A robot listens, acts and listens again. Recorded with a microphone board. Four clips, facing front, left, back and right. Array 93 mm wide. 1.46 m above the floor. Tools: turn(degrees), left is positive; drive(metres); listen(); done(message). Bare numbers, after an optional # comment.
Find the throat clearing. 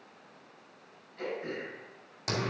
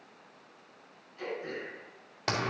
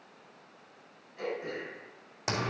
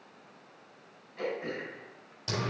# The throat clearing: 100° right.
turn(-100)
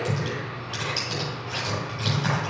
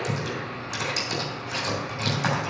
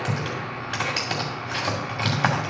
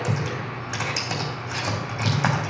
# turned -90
# Nothing new. It was at 10° right.
turn(-10)
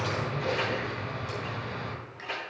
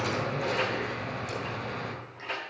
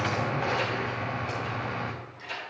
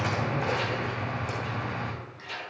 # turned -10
listen()
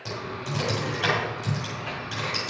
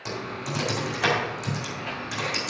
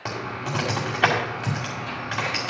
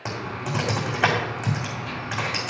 done("I heard throat clearing from this way, but can't make it out now.")